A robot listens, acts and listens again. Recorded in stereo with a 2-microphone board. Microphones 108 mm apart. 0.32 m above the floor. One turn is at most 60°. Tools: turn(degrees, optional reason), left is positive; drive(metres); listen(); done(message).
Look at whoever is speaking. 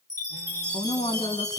turn(degrees=60, reason="The woman speaking: about 60° left or 120° left.")
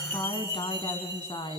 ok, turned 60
turn(degrees=50, reason="So it is at 50° left.")
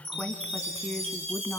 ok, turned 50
turn(degrees=15, reason="The woman speaking is now 15° left.")
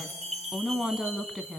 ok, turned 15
done("Facing the woman speaking, 2 to 4 m away.")